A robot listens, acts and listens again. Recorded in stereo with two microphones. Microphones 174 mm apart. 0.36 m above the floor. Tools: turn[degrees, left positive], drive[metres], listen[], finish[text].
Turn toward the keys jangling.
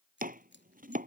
Action: turn[90]
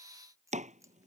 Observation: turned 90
Thought: So it is at 15° right.
Action: turn[-15]
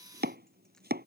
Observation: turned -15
Action: listen[]
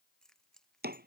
Action: finish[Found it: keys jangling, straight ahead.]